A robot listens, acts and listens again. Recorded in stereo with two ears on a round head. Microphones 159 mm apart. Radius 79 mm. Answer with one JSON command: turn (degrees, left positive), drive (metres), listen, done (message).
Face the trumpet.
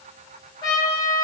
{"turn": 25}
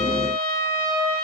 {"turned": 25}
{"turn": 130}
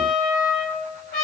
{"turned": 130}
{"turn": 50}
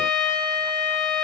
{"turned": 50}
{"done": "Found it: a trumpet, straight ahead, 1 to 2 m away."}